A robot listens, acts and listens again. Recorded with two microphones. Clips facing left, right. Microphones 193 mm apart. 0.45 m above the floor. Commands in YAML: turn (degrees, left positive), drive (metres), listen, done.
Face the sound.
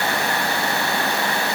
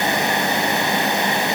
listen: true
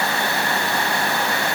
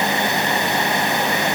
listen: true
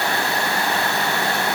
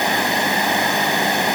done: "I can't make out anything."